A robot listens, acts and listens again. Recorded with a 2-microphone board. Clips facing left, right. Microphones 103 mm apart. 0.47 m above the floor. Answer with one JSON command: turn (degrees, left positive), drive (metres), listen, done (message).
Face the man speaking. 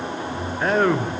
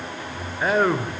{"turn": -30}
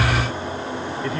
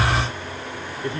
{"turn": -145}
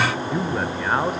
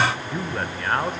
{"turn": 10}
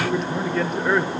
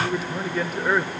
{"done": "Facing the man speaking."}